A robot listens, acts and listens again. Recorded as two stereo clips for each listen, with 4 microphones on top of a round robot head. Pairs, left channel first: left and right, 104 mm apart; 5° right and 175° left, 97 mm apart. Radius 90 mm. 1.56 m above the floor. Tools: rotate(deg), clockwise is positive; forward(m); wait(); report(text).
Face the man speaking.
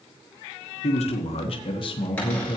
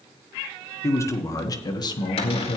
rotate(-30)
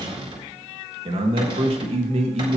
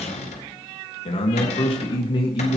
rotate(60)
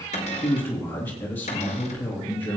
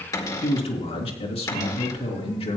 rotate(-15)
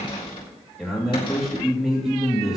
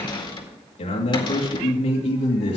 report("Facing the man speaking.")